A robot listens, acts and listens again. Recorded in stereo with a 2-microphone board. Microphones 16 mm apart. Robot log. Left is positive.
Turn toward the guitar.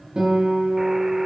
note: The guitar: about 60° right or 120° right.
cmd yaw -60
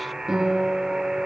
note: So it is at 55° right.
cmd yaw -55
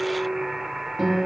note: The guitar is now 10° right.
cmd yaw -10
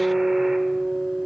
end: Found it: a guitar, straight ahead.